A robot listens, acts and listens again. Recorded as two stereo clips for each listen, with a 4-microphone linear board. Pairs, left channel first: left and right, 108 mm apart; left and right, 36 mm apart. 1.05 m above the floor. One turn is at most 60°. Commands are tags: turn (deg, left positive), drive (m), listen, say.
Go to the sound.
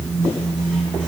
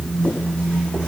<listen/>
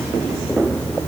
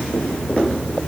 <listen/>
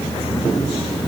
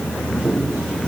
<say>I can't make out anything.</say>